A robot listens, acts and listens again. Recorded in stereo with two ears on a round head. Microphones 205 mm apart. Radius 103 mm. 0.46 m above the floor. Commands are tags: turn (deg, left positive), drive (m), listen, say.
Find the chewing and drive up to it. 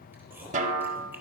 <turn deg="-30"/>
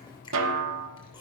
<turn deg="20"/>
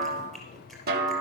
<drive m="1.0"/>
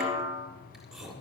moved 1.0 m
<drive m="1.0"/>
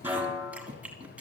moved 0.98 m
<drive m="1.0"/>
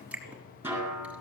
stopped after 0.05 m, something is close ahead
<say>Arrived at the chewing, straight ahead.</say>